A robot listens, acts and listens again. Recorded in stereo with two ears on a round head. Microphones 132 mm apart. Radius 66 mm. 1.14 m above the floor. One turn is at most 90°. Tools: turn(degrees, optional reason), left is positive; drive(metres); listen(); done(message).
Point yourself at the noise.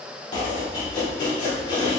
turn(degrees=30, reason="The chopping: about 30° left or 150° left.")
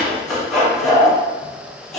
done("Found it: chopping, straight ahead, 1 to 2 m away.")